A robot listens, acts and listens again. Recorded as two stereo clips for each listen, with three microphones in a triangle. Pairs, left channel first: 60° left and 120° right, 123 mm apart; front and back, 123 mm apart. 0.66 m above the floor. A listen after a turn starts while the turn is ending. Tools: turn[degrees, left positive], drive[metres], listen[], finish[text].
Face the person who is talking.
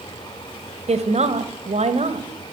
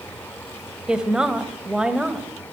Thought: The woman speaking: 95° right.
Action: turn[-95]
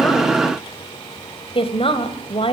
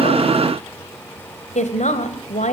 Thought: The woman speaking is now 20° left.
Action: turn[20]
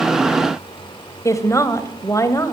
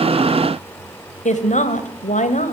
Action: finish[Facing the woman speaking, 2 to 4 m away.]